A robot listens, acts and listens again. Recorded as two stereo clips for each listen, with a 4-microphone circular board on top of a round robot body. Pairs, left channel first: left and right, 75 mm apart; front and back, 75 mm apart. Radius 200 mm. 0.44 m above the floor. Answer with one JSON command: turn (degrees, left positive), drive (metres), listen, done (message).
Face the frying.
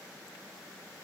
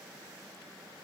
{"listen": true}
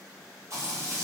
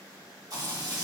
{"turn": -140}
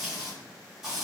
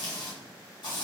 {"done": "Found it: frying, straight ahead, 1 to 2 m away."}